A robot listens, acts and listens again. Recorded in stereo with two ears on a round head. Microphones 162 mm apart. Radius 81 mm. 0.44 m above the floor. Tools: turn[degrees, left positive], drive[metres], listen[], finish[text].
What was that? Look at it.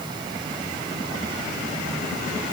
Action: listen[]
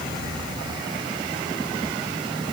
Action: listen[]
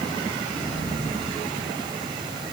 Action: finish[I can't make out anything to turn to.]